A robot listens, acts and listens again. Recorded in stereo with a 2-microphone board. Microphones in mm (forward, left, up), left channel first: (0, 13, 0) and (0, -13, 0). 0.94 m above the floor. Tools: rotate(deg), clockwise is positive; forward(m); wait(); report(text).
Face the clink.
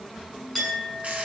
rotate(-30)
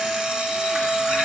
rotate(25)
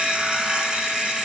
wait()
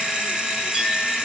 wait()
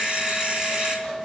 rotate(20)
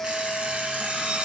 wait()
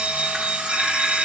wait()
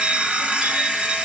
report("I heard a clink from this way, but can't make it out now.")